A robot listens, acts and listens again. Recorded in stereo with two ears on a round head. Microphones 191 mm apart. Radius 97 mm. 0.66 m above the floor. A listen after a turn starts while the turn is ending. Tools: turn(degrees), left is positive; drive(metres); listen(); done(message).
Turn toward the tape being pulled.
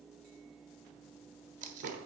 turn(degrees=-35)
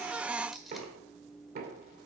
done("Facing the tape being pulled.")